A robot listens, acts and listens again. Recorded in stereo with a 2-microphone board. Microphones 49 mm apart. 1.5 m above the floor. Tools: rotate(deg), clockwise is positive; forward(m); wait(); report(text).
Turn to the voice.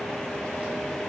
wait()
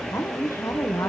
rotate(-75)
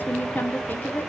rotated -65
rotate(-40)
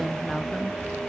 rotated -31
rotate(-10)
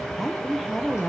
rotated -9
report("Found it: a woman speaking, straight ahead, 1 to 2 m away.")